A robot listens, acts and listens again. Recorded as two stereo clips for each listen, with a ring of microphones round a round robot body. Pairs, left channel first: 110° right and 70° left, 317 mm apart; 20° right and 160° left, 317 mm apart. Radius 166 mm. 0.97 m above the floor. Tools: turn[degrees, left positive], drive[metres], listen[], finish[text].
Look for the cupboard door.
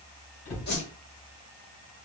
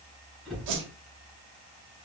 Thought: The cupboard door: 110° right.
Action: turn[-110]
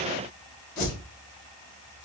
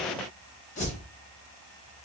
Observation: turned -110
Action: listen[]
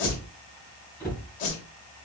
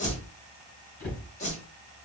Thought: The cupboard door is now 30° right.
Action: turn[-30]
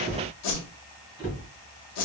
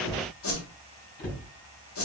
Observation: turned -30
Thought: The cupboard door is now 10° right.
Action: turn[-10]
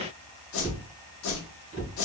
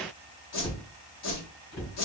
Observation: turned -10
Action: finish[Found it: a cupboard door, straight ahead, 2 to 4 m away.]